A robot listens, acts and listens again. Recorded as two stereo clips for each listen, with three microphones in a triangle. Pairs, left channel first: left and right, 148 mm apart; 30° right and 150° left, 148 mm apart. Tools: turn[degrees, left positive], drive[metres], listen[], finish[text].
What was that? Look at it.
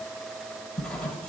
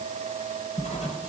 Action: finish[Facing the writing, 1 to 2 m away.]